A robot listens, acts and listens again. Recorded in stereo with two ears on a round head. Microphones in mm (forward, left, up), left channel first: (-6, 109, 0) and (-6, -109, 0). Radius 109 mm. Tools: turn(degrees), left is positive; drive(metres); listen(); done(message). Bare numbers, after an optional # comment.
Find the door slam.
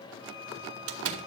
# The door slam: about 65° right or 115° right.
turn(-65)
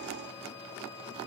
listen()
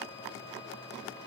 done("I heard a door slam, but can't make it out now. It was about straight ahead or 50° right.")